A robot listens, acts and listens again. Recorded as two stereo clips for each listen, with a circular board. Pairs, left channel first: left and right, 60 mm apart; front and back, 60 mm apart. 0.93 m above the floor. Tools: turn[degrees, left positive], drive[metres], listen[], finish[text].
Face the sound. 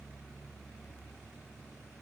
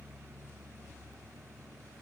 Action: listen[]
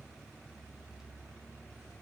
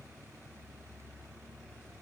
Action: listen[]
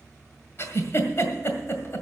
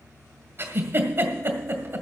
Thought: The giggle: 135° left.
Action: turn[135]
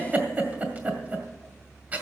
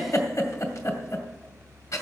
Thought: The giggle is now 25° right.
Action: turn[-25]
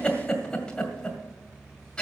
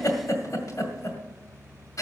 Thought: The giggle is now 15° left.
Action: turn[15]
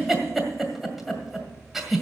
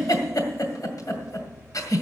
Action: finish[Found it: a giggle, straight ahead, 1 to 2 m away.]